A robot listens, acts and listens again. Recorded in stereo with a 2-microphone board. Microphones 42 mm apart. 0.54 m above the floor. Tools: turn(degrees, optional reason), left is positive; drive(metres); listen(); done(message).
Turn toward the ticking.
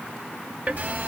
turn(degrees=-40, reason="The ticking: about 40° right or 140° right.")
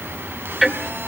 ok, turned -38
done("Found it: ticking, straight ahead.")